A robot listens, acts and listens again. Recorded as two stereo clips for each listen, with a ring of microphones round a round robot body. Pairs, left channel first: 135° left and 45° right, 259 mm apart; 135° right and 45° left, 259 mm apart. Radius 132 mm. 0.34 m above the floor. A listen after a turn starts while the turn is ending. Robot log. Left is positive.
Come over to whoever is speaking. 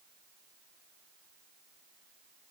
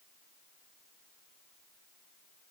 cmd idle
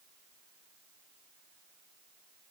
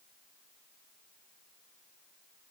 cmd idle
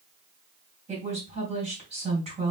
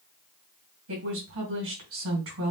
note: The woman speaking: 20° left.
cmd yaw +20
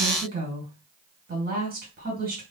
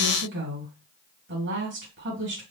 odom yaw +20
cmd fwd 1.0
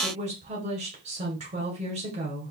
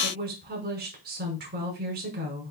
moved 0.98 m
note: The woman speaking is now 10° left.
cmd yaw +10
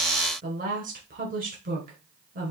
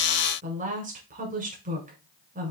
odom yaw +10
cmd fwd 1.0
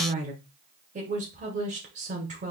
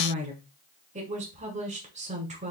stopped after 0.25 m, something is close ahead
end: I am next to the woman speaking.